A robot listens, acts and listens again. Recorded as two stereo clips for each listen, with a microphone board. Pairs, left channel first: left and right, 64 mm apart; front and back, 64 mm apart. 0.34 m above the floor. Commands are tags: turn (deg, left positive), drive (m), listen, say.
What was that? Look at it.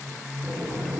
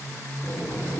<turn deg="-40"/>
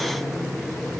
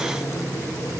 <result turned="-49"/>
<turn deg="10"/>
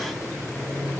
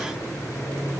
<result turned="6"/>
<say>Found it: boiling, straight ahead, over 4 m away.</say>